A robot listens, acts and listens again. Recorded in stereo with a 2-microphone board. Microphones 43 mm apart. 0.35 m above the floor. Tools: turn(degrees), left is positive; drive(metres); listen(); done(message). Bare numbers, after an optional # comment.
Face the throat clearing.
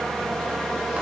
listen()
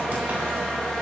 listen()
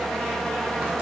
done("I can't make out throat clearing to turn to.")